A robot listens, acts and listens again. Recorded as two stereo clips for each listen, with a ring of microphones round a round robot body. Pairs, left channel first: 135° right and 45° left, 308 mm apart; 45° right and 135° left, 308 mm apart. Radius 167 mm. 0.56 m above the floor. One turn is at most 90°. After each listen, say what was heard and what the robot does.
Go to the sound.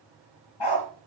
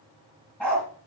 The dog barking: 130° right. Turn 90° right.
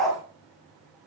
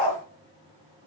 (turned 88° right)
The dog barking is now 45° right. Turn 45° right.
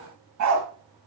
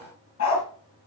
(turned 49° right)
Drive 1.0 m forward.
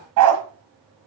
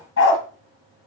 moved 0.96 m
The dog barking is now 10° left. Turn 10° left.
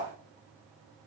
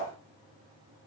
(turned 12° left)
Keep listening.
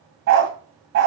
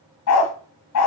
Drive 1.0 m forward.
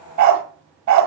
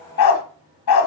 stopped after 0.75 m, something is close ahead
I am next to the dog barking.